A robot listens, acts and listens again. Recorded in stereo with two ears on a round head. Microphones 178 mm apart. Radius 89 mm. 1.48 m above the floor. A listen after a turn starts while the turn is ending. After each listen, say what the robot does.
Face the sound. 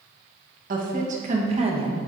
Turn 30° right.
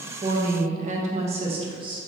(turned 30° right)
Turn 25° right.
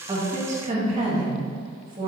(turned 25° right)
Turn 30° right.
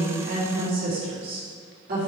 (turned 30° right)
Turn 125° right.
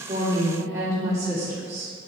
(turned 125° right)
Turn 15° right.
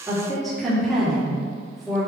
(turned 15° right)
Found it: a woman speaking, straight ahead.